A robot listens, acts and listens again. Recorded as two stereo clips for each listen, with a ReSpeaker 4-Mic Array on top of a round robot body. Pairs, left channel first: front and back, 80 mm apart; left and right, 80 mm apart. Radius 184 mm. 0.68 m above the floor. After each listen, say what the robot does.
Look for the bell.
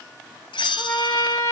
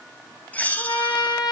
Turn 20° left.
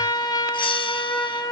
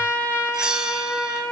Facing the bell.